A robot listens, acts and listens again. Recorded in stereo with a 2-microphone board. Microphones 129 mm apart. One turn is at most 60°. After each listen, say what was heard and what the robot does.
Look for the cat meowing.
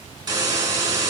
Keep listening.
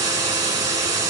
Keep listening.
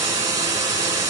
I can't make out a cat meowing to turn to.